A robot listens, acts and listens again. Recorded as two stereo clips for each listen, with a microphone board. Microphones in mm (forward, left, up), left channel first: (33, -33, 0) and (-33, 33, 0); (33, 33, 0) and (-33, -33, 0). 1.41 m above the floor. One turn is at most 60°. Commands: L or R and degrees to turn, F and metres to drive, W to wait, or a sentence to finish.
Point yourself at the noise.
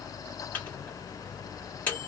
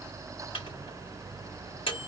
L25
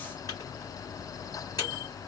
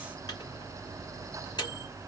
Facing the microwave, 2 to 4 m away.